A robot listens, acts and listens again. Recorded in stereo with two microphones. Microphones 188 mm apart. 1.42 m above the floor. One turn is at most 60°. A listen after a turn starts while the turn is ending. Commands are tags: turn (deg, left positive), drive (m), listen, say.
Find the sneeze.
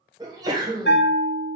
<turn deg="-20"/>
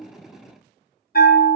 <listen/>
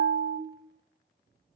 <say>I heard a sneeze, but can't make it out now. It was about straight ahead or 140° right.</say>